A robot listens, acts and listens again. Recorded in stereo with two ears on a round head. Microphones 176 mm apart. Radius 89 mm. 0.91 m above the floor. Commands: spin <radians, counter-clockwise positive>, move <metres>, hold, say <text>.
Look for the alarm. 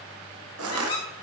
hold
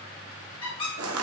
hold
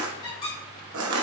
say I can't make out an alarm, only a squeak and crushing.